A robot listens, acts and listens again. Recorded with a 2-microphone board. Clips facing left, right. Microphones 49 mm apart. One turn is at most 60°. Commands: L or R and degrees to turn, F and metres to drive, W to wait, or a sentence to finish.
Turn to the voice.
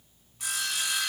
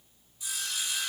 W
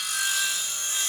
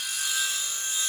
W
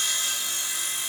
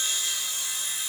I can't make out anyone speaking to turn to.